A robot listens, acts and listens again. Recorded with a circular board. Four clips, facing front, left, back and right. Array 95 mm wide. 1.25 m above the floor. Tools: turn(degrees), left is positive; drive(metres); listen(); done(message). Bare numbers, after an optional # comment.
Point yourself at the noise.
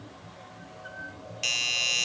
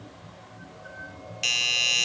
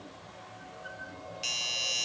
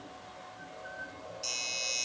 # The doorbell: 70° left.
turn(70)
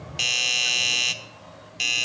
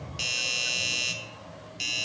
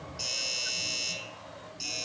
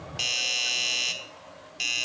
# The doorbell is now 10° right.
turn(-10)
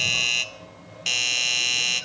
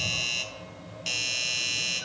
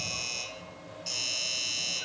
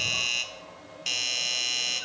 done("Facing the doorbell.")